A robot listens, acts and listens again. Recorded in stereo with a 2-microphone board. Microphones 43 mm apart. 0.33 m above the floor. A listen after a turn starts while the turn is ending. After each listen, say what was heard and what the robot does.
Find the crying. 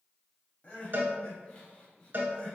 The crying: about 30° left or 150° left. Turn 30° left.
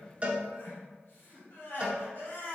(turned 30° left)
So it is at 115° left. Turn 115° left.
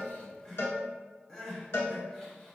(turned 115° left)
The crying is now 15° left. Turn 15° left.
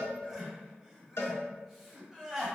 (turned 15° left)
Facing the crying.